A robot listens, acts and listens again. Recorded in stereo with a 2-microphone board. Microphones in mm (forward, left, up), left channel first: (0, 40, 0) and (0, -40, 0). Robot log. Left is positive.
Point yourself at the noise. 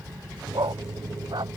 note: The dog barking: about 65° right or 115° right.
cmd yaw -65
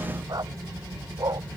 note: So it is at 55° right.
cmd yaw -55
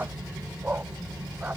note: The dog barking is now 20° right.
cmd yaw -20
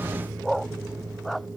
end: Found it: a dog barking, straight ahead.